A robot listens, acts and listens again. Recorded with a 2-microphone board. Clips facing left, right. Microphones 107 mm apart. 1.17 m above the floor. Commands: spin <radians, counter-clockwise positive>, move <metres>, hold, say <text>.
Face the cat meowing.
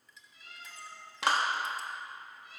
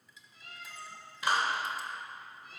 spin -0.79
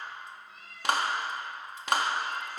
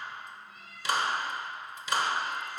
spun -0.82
say Facing the cat meowing.